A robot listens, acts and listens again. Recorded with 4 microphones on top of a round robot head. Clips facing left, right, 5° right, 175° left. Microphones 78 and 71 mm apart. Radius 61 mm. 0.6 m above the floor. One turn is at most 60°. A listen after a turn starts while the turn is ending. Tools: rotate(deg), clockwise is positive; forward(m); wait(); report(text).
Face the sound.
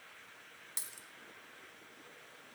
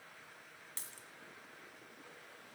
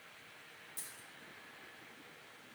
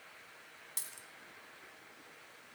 rotate(-60)
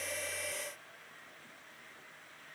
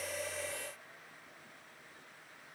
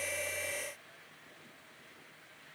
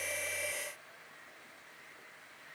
rotate(-60)
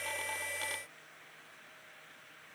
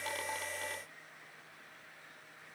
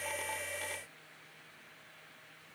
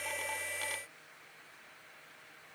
rotate(-45)
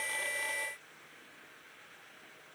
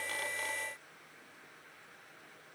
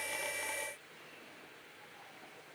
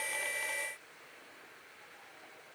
report("Facing where the dropped coin came from. I can't hear it now.")